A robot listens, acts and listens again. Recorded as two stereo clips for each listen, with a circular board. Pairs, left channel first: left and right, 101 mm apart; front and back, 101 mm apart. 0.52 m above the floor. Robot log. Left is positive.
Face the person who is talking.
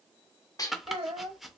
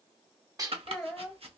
note: The child speaking: 85° right.
cmd yaw -85
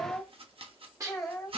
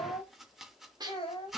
end: Found it: a child speaking, straight ahead, 1 to 2 m away.